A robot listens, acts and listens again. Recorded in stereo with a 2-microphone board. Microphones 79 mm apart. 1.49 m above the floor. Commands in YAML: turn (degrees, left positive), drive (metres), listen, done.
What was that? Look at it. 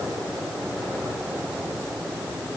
listen: true
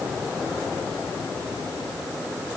listen: true
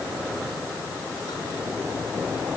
done: "I can't make out anything."